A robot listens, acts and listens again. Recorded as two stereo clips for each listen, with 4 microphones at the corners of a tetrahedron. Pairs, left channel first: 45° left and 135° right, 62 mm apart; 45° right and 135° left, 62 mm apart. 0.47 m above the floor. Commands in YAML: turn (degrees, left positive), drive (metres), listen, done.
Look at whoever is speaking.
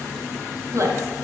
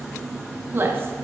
turn: -170
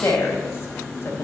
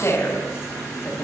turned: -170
done: "Facing the woman speaking."